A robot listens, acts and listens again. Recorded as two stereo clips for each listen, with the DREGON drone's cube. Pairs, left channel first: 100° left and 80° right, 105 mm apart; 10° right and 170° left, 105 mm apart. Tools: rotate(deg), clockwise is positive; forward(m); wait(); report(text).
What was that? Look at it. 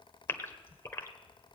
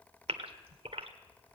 rotate(-165)
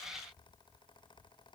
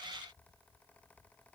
report("I heard a gasp from this way, but can't make it out now.")